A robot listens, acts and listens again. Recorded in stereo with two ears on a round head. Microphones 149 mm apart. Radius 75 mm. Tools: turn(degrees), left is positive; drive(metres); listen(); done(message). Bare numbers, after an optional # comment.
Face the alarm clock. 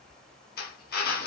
listen()
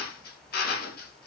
listen()
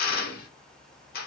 done("I can't make out an alarm clock to turn to.")